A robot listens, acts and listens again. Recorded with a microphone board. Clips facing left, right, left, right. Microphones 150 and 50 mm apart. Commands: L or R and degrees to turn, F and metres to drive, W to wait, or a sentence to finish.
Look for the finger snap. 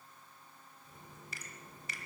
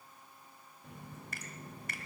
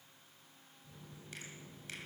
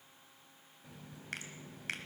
R50
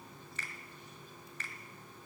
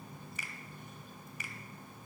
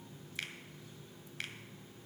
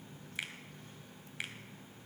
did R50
R10
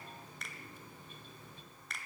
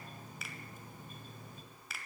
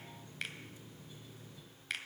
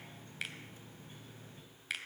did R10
Found it: a finger snap, straight ahead.